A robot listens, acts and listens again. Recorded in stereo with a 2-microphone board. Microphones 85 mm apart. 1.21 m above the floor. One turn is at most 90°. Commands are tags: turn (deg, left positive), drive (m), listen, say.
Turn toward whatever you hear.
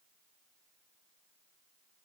<listen/>
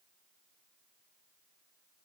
<listen/>
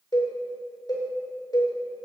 <turn deg="55"/>
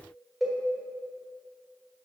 <say>Found it: a cowbell, straight ahead.</say>